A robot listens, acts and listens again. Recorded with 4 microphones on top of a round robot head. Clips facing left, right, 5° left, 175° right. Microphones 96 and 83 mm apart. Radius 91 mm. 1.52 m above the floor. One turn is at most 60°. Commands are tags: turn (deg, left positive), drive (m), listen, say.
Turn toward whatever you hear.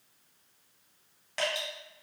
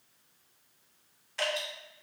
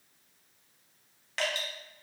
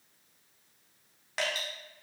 <turn deg="60"/>
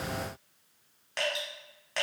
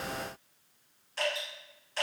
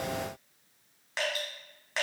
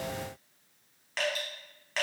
<turn deg="60"/>
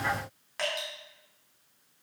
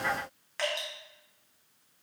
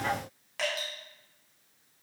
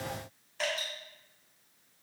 <turn deg="10"/>
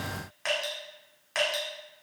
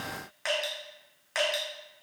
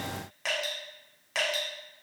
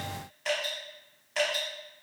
<say>Facing the dripping, 1 to 2 m away.</say>